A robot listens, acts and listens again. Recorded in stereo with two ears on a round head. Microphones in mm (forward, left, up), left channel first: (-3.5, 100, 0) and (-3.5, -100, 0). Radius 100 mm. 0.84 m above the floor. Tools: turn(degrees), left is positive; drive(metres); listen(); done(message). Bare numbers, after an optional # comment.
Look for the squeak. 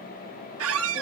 # The squeak: about 65° right or 115° right.
turn(-65)
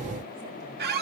# So it is at 45° right.
turn(-45)
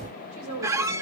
# The squeak is now 15° right.
turn(-15)
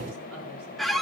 done("Facing the squeak.")